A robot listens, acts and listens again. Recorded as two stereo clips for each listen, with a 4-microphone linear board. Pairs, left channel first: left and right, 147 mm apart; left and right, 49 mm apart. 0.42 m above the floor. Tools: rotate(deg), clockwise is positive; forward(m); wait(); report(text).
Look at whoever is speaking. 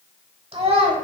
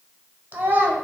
rotate(40)
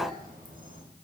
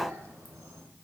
wait()
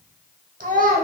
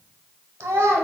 rotate(95)
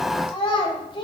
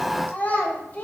rotate(-35)
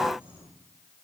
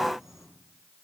wait()
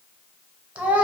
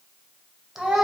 rotate(10)
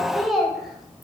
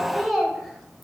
report("Found it: a child speaking, straight ahead, under 1 m away.")